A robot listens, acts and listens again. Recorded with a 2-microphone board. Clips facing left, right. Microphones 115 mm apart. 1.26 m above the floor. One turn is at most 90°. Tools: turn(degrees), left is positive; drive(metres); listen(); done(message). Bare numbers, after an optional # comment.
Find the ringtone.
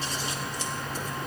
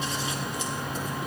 listen()
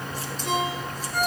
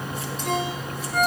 # The ringtone: about 60° right or 120° right.
turn(-60)
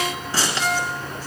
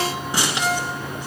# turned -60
# So it is at 60° right.
turn(-60)
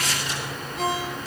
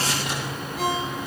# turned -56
done("Found it: a ringtone, straight ahead, over 4 m away.")